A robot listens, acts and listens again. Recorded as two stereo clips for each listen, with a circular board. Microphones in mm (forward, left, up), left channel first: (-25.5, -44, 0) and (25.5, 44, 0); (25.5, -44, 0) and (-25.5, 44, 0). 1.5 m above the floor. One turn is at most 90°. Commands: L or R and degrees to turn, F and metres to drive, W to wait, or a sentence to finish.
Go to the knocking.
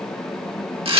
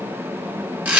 W
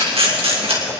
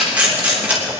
W
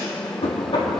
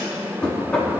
R90
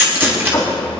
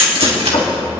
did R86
R55
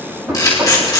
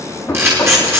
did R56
F1.0
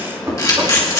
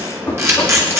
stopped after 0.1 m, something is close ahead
Blocked. The knocking is further on, straight ahead.